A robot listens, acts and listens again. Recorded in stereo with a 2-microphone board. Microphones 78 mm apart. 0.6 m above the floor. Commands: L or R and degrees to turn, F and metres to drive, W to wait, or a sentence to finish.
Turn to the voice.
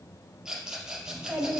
R20
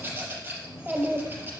R20
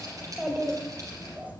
R20
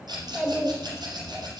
R15
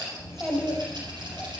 R30
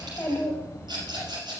L25
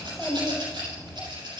Found it: a child speaking, straight ahead, 2 to 4 m away.